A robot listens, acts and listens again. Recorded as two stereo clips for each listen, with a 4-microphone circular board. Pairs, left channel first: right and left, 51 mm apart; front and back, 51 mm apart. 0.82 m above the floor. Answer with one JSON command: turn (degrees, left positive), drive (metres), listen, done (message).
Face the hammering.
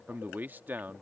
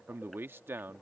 {"listen": true}
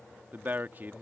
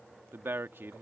{"listen": true}
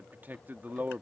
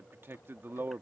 {"done": "I can't make out hammering to turn to."}